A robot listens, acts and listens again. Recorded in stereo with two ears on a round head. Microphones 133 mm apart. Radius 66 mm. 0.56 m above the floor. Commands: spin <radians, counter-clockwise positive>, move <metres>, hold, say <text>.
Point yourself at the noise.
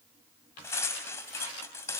spin 0.35
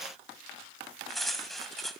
say Facing the cutlery clinking.